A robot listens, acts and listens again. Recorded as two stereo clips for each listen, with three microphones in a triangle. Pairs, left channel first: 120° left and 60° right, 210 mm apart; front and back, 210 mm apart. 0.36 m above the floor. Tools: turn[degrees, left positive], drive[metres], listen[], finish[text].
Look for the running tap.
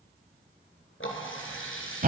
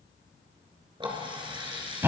Thought: The running tap: 115° left.
Action: turn[115]
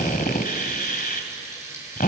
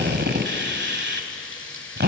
Thought: The running tap is now 15° left.
Action: turn[15]
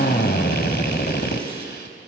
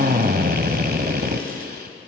Action: listen[]
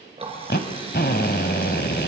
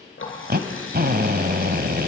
Action: finish[Facing the running tap.]